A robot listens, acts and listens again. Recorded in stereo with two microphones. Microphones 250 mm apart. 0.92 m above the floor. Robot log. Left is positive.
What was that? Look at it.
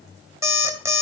cmd yaw -30
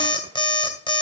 note: So it is at 20° left.
cmd yaw +20
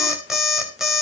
end: Found it: an alarm clock, straight ahead, 2 to 4 m away.